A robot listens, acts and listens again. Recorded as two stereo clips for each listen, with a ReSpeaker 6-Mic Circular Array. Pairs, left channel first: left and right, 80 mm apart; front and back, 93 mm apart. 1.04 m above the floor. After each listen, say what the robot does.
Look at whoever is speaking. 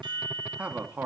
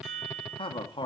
Turn 25° right.
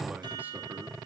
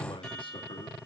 Keep listening.
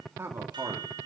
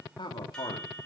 Turn 35° right.
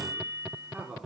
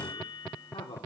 Turn 25° right.
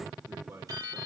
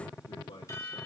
Turn 25° right.
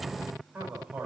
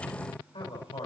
Turn 20° right.
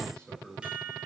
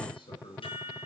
Facing the man speaking, over 4 m away.